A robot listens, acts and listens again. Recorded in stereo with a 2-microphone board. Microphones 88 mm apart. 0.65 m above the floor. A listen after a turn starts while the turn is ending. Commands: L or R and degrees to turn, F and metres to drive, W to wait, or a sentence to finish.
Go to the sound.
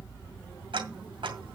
R90
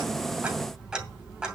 F1.0
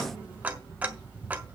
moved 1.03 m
R15
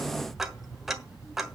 F1.0
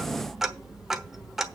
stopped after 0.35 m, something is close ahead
Arrived at the ticking, straight ahead.